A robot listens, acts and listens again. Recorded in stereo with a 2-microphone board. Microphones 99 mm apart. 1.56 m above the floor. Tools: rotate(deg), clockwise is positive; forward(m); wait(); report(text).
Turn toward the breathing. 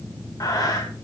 rotate(-40)
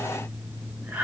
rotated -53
rotate(15)
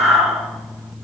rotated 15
report("Found it: breathing, straight ahead.")